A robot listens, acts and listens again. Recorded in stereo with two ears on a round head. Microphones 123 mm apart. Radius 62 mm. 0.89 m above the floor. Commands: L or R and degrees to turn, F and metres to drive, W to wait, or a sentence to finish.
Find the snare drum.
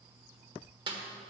R35
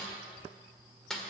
Found it: a snare drum, straight ahead.